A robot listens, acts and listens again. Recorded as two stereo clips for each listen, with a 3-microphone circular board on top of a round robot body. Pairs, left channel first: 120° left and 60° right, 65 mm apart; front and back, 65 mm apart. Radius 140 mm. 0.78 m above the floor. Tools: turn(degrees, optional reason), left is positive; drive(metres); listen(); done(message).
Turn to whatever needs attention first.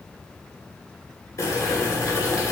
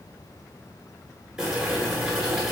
listen()
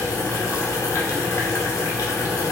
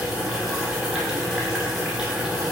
listen()
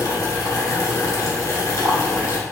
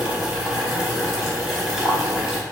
done("I can't make out anything urgent to turn to.")